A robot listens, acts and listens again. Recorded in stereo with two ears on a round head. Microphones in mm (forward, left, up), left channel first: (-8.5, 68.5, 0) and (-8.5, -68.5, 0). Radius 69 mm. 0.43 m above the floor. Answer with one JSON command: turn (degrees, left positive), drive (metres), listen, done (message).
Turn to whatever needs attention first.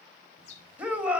{"turn": -30}
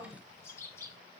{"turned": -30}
{"listen": true}
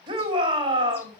{"turn": -140}
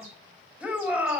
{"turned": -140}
{"turn": -10}
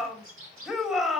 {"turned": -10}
{"done": "Facing the shout, 2 to 4 m away."}